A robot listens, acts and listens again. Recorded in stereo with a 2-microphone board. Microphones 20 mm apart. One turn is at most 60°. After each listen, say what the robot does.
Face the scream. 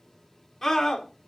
Turn 20° left.
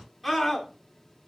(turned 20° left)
Facing the scream.